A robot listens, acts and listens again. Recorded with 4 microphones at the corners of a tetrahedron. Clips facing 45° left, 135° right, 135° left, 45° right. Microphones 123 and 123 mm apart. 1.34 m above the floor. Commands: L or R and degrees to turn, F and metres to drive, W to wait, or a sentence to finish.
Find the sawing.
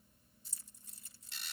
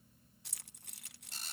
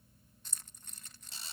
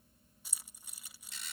W
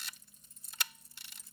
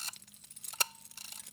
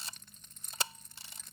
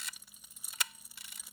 W
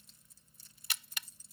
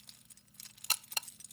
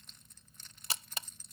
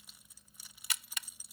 I can't make out sawing, only a camera shutter and keys jangling.